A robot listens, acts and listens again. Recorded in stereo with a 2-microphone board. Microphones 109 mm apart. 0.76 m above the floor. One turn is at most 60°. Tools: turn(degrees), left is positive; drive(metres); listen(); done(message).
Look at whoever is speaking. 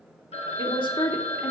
turn(degrees=50)
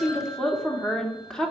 done("Facing the woman speaking.")